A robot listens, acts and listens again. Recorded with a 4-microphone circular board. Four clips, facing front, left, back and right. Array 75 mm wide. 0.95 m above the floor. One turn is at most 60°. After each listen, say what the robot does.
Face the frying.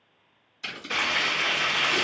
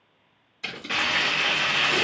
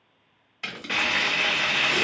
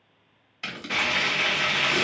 Turn 60° left.
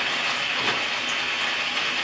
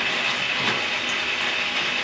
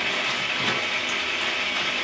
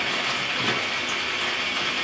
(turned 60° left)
Turn 60° left.
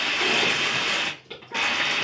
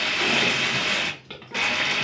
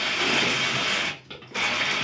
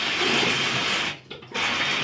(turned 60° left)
Turn 40° left.
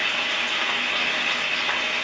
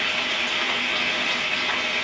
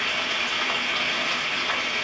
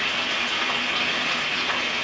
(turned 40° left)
Turn 15° left.
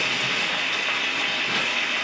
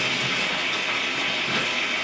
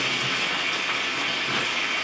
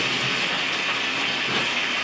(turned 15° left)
Found it: frying, straight ahead, 1 to 2 m away.